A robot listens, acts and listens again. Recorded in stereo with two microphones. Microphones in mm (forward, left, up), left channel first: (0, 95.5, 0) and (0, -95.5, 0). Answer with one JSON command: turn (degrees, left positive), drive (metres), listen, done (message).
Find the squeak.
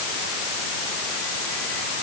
{"listen": true}
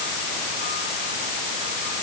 {"listen": true}
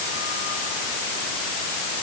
{"done": "I can't make out a squeak to turn to."}